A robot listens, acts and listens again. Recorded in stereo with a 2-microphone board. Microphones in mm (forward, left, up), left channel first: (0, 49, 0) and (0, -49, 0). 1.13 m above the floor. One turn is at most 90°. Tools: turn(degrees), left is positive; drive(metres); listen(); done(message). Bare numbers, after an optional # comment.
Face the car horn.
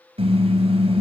turn(-90)
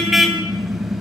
done("Facing the car horn.")